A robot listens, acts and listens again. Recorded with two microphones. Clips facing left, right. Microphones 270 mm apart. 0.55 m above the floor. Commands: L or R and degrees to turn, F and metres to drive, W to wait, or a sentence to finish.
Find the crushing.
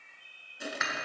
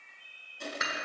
L30
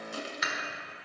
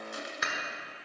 L140
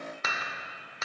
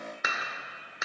W
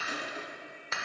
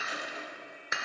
L55
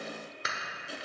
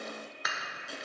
Found it: crushing, straight ahead.